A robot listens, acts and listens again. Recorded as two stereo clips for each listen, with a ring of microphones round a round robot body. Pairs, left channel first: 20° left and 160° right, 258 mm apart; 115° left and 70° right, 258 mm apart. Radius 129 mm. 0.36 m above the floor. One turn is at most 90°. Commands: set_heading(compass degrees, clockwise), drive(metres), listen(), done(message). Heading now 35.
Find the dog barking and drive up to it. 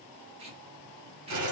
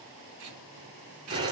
listen()
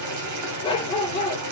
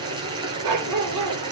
set_heading(85)
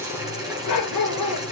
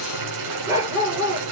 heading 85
set_heading(75)
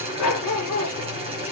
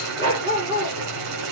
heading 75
drive(1.0)
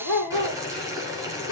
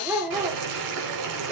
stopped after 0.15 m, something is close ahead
set_heading(60)
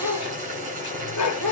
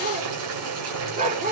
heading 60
done("Blocked. The dog barking is further on, straight ahead.")